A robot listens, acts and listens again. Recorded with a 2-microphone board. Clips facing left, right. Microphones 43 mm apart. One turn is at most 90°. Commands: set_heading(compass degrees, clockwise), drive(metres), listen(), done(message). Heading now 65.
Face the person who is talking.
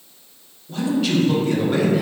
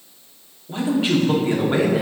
set_heading(90)
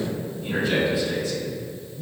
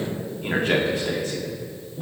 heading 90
set_heading(180)
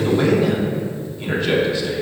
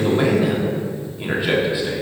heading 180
set_heading(195)
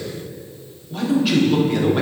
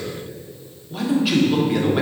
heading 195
done("Found it: a man speaking, straight ahead.")